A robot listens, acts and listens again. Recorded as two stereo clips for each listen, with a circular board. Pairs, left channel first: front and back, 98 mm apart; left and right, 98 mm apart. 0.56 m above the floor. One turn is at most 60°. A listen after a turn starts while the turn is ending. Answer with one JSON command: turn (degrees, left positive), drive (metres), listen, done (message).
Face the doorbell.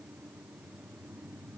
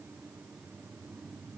{"listen": true}
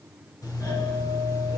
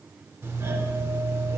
{"turn": -35}
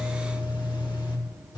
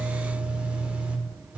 {"turn": -20}
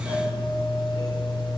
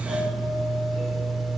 {"done": "Facing the doorbell."}